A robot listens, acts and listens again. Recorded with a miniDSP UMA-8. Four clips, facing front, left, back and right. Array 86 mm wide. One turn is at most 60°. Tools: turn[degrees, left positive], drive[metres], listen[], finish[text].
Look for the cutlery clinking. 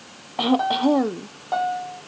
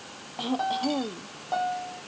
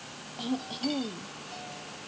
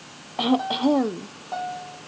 Action: listen[]
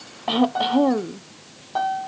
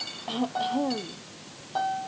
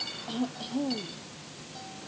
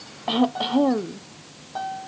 Thought: The cutlery clinking: 135° left.
Action: turn[60]
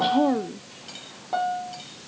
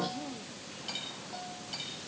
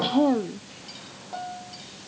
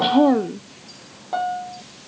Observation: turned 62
Thought: Nothing new. It was at 70° left.
Action: turn[60]
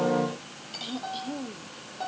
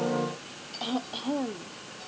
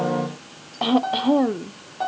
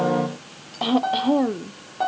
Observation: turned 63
Thought: Nothing new. It was at 10° left.
Action: turn[10]
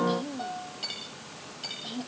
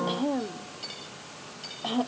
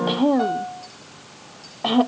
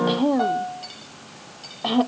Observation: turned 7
Action: finish[Found it: cutlery clinking, straight ahead.]